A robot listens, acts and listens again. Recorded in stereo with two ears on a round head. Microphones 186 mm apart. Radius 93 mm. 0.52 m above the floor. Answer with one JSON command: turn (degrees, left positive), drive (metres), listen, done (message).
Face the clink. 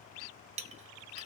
{"turn": -35}
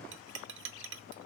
{"turn": -110}
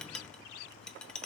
{"done": "Found it: a clink, straight ahead, 1 to 2 m away."}